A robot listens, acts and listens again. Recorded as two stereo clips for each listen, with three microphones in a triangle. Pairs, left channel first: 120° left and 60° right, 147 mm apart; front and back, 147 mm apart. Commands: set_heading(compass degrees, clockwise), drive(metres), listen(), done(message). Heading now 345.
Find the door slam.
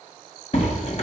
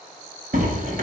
set_heading(185)
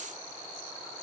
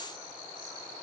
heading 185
done("Facing where the door slam came from. I can't hear it now.")